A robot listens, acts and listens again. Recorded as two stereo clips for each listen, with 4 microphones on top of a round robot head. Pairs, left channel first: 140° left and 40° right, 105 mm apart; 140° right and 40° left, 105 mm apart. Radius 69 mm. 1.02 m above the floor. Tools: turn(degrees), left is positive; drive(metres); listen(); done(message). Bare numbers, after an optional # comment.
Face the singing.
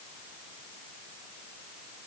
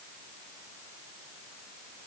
listen()
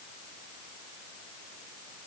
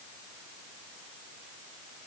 listen()
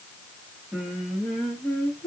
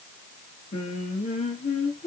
# The singing: 150° right.
turn(-150)
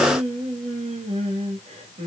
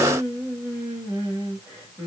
# The singing is now 20° right.
turn(-20)
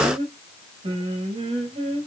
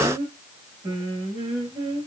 done("Facing the singing, 1 to 2 m away.")